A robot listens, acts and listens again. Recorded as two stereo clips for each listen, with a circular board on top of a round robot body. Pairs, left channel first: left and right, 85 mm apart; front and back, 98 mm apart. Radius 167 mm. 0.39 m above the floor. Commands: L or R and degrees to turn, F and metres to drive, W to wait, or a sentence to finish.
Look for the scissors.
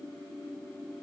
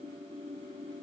W
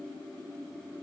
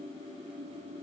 W
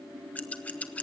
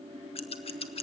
L15
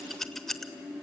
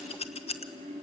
Found it: scissors, straight ahead, 1 to 2 m away.